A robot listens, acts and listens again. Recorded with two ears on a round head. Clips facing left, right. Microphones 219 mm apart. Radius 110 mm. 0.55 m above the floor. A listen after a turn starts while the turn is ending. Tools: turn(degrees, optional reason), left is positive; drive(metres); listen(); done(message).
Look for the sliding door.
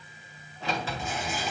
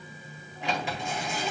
turn(degrees=-15, reason="The sliding door: about 15° right or 165° right.")
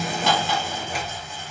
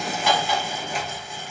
done("Found it: a sliding door, straight ahead, 2 to 4 m away.")